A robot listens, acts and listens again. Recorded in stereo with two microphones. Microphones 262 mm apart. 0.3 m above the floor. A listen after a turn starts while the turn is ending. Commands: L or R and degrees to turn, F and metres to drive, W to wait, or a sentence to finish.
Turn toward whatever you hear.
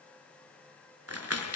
R65
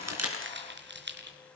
R45
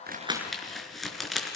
Facing the crumpling, over 4 m away.